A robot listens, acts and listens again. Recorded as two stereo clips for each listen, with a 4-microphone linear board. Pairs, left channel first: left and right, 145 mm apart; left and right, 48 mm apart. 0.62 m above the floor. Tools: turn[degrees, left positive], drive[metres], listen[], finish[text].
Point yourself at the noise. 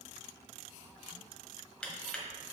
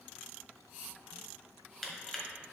Action: turn[30]
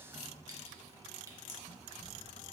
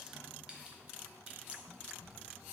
Action: listen[]
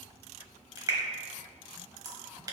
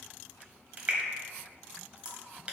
Thought: So it is at 25° right.
Action: turn[-25]
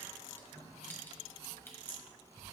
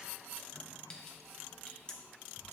Action: listen[]
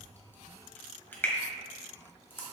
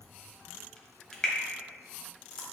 Thought: The crushing is now 15° left.
Action: turn[15]
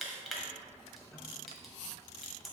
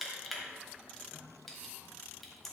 Action: finish[Facing the crushing, 1 to 2 m away.]